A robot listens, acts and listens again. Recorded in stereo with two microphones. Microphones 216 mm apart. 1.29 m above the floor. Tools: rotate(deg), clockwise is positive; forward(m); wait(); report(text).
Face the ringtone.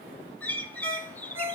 rotate(70)
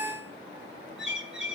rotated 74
rotate(30)
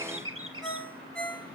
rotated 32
report("Facing the ringtone, over 4 m away.")